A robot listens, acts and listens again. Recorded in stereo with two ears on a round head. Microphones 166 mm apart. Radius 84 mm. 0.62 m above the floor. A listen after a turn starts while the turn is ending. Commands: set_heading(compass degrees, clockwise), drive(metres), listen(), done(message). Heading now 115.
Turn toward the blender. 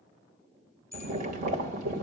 listen()
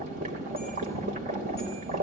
listen()
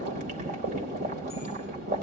done("I can't make out a blender to turn to.")